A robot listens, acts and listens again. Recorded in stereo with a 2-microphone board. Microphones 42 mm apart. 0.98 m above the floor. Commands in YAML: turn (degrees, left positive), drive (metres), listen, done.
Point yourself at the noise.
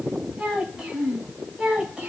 turn: -20
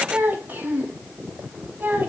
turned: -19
turn: -130
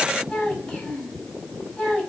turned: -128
turn: 15
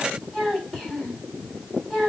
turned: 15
done: "Facing the child speaking, over 4 m away."